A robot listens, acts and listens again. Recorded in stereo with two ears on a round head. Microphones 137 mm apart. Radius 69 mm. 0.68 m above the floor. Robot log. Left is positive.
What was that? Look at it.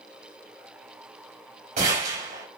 note: The gunshot: about 45° right or 135° right.
cmd yaw -45
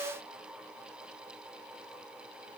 cmd idle
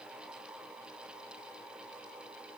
end: I heard a gunshot, but can't make it out now. It was about straight ahead or 90° right.